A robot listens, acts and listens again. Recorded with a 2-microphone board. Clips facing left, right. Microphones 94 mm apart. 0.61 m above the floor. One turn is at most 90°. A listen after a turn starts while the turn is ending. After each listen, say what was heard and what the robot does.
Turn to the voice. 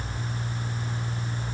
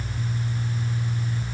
Keep listening.
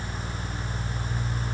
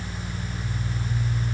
Keep listening.
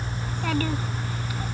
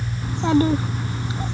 The child speaking: about 25° right or 155° right. Turn 25° right.
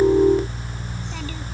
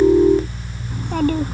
So it is at 135° right. Turn 90° right.
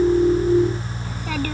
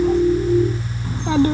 The child speaking is now 25° right. Turn 25° right.
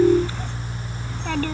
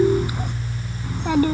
The child speaking is now 15° right. Turn 15° right.
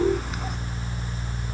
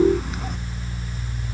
Keep listening.
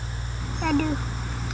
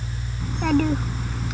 Facing the child speaking.